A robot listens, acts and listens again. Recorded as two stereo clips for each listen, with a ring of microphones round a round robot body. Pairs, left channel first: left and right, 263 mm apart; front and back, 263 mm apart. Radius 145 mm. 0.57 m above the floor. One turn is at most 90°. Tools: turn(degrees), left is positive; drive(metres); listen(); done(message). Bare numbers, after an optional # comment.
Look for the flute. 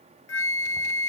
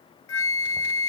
# The flute: 45° left.
turn(45)
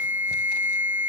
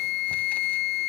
done("Facing the flute.")